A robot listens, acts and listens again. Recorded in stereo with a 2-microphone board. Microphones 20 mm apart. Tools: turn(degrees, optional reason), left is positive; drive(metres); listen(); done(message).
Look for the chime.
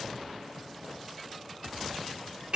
listen()
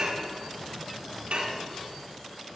listen()
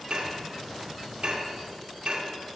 done("I can't make out a chime, only dishes clattering.")